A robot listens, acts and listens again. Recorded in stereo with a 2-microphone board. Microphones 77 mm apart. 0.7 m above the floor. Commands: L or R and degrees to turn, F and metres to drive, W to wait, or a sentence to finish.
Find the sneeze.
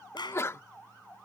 L35
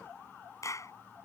W
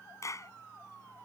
I heard a sneeze, but can't make it out now. It was about straight ahead or 110° left.